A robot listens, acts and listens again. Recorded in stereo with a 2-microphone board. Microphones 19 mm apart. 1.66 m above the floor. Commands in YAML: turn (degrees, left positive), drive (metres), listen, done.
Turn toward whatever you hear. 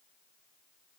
listen: true
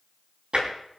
turn: -75
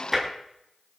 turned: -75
done: "Found it: tapping, straight ahead, over 4 m away."